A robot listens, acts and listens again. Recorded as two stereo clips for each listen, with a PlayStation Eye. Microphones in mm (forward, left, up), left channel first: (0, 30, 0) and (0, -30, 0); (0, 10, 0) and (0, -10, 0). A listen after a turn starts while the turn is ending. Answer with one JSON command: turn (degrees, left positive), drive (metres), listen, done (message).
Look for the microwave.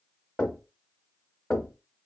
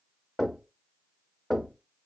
{"listen": true}
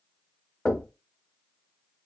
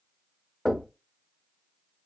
{"listen": true}
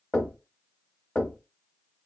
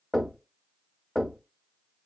{"done": "I can't make out a microwave to turn to."}